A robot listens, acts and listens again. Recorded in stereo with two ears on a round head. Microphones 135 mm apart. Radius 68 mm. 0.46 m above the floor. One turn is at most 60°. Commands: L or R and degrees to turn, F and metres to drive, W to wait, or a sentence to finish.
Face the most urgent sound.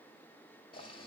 W
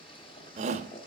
R45
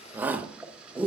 R15
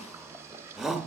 Facing the shout.